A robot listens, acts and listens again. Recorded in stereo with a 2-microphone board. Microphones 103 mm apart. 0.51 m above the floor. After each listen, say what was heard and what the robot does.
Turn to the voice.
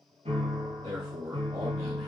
The man speaking: about 30° right or 150° right. Turn 30° right.
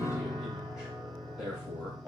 So it is at 10° right. Turn 10° right.
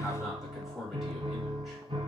Found it: a man speaking, straight ahead.